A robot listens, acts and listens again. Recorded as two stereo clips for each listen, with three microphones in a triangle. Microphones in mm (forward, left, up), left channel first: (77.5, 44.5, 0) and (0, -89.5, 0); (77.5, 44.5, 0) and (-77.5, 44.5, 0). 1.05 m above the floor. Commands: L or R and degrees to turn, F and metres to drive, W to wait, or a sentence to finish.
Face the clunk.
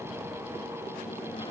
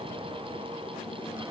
W
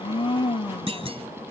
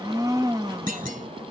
R165
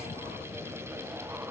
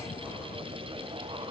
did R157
R10
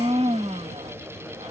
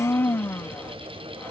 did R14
I heard a clunk from this way, but can't make it out now.